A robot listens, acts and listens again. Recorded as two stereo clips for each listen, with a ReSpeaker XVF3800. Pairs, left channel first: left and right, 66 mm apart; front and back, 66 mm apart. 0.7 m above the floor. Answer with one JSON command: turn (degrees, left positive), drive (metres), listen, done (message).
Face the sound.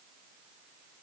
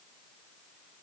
{"listen": true}
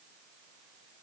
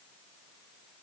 {"listen": true}
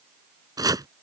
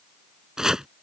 {"turn": -100}
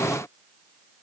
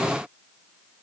{"listen": true}
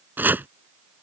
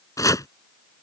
{"turn": -30}
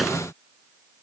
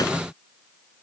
{"listen": true}
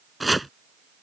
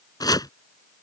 {"done": "Facing the chopping."}